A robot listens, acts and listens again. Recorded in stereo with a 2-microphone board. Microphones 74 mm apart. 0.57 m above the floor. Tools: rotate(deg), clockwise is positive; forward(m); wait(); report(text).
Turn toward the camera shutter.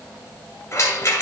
wait()
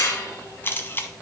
rotate(-30)
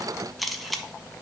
report("Found it: a camera shutter, straight ahead, under 1 m away.")